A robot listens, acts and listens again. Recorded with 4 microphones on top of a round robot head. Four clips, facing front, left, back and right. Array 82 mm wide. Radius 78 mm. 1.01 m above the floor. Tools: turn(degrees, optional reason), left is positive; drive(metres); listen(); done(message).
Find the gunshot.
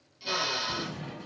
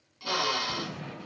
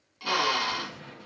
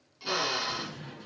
turn(degrees=50, reason="The gunshot: 50° left.")
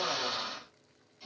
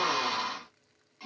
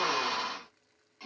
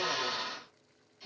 done("I heard a gunshot from this way, but can't make it out now.")